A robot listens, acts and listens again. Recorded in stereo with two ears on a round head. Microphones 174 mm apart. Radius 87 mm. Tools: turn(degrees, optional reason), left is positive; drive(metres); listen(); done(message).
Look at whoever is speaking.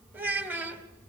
turn(degrees=-30)
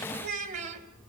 turn(degrees=-140, reason="So it is at 140° right.")
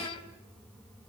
turn(degrees=25, reason="The child speaking is now 25° left.")
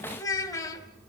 turn(degrees=20, reason="The child speaking is now 20° left.")
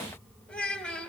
done("Facing the child speaking.")